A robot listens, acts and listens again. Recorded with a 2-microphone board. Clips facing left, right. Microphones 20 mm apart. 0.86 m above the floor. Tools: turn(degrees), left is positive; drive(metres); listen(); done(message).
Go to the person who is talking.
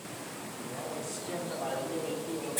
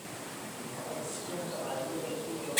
turn(degrees=70)
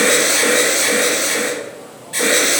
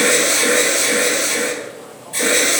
listen()
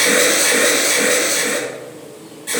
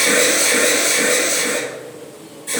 listen()
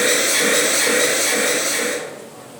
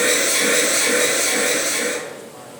done("I heard a man speaking, but can't make it out now. It was about straight ahead or 40° left. I did not reach it.")